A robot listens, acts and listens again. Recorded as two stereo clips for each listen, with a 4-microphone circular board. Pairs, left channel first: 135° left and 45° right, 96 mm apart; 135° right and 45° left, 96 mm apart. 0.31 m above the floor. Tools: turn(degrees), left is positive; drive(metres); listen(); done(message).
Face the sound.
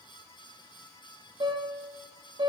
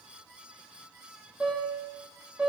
turn(degrees=-30)
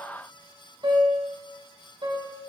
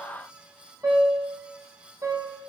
turn(degrees=-10)
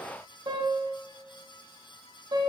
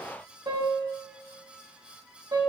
done("Facing the piano.")